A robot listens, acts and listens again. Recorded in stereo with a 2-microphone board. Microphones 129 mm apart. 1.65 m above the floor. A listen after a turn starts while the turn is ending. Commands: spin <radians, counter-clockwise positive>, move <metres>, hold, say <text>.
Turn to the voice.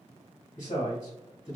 spin 1.22
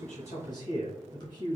spin 0.61
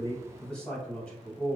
spin 0.17
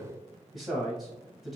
say Found it: a man speaking, straight ahead, 1 to 2 m away.